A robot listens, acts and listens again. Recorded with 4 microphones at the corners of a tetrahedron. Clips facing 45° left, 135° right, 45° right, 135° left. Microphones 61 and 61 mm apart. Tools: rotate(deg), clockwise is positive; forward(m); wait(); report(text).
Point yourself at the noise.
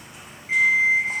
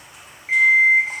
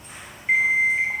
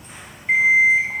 rotate(135)
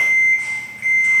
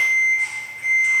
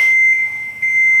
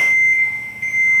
rotate(-20)
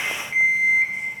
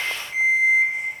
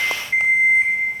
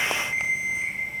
report("Facing the alarm clock, 1 to 2 m away.")